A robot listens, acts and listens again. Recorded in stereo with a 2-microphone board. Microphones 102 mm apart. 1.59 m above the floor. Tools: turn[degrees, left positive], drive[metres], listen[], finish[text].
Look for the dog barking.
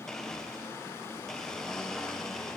Action: listen[]
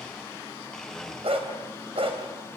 Thought: The dog barking: about 70° right or 110° right.
Action: turn[-70]
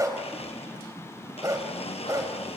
Thought: So it is at 35° right.
Action: turn[-35]
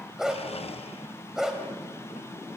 Action: finish[Found it: a dog barking, straight ahead, 2 to 4 m away.]